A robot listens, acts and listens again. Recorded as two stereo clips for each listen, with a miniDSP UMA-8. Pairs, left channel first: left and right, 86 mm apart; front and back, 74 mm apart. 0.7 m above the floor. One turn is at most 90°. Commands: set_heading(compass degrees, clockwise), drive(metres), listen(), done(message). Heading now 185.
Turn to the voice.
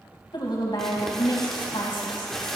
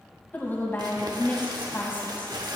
set_heading(120)
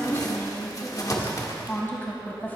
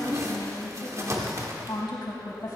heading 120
set_heading(95)
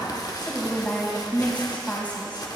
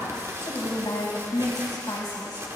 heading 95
set_heading(75)
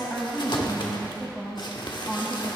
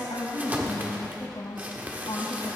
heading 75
done("Found it: a woman speaking, straight ahead, 2 to 4 m away.")